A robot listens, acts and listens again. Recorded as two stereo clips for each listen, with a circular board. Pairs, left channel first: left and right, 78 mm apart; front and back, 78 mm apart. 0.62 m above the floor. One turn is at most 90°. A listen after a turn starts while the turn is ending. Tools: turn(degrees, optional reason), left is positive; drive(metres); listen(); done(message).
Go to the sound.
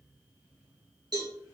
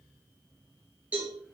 turn(degrees=-90, reason="The cowbell: 110° right.")
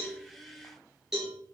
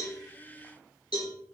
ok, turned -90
drive(metres=1.0)
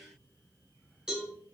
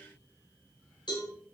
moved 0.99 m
turn(degrees=-10, reason="The cowbell is now 10° right.")
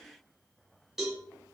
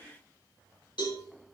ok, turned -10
drive(metres=1.0)
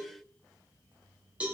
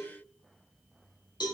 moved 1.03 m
turn(degrees=-15, reason="The cowbell is now 15° right.")
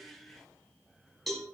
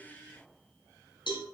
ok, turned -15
drive(metres=1.0)
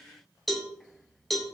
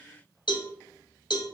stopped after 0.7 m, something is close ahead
done("Arrived at the cowbell, straight ahead.")